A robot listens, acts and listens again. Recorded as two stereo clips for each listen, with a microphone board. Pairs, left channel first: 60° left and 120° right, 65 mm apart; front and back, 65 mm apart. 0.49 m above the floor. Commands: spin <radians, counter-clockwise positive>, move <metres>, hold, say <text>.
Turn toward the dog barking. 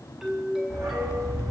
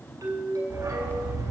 spin -2.71
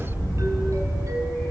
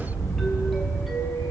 spin -0.61
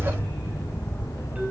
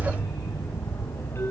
spin 0.17
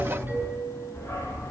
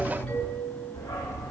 say Facing the dog barking.